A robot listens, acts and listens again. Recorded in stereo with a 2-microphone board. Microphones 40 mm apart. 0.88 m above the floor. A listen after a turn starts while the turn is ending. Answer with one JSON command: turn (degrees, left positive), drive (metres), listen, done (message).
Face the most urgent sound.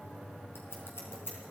{"listen": true}
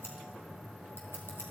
{"listen": true}
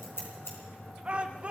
{"turn": -30}
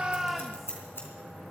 {"listen": true}
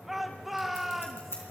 {"done": "Found it: a shout, straight ahead."}